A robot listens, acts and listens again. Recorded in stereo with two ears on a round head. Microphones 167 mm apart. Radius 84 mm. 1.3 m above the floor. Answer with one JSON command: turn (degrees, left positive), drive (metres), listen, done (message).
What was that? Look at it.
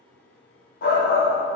{"turn": 50}
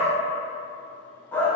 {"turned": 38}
{"turn": 10}
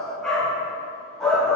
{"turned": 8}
{"done": "Facing the shout, under 1 m away."}